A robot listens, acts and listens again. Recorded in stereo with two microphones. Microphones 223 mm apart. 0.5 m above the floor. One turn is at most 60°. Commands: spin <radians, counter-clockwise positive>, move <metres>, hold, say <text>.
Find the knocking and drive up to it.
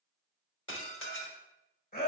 hold
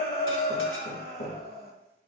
spin 0.52
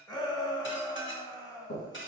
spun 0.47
spin 1.05
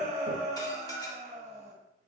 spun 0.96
spin 1.05
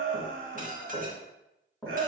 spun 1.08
move 1.0
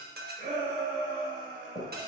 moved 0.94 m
spin 0.26
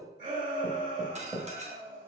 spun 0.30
move 1.0
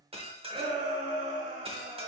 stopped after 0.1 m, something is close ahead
hold
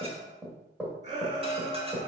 say I am next to the knocking.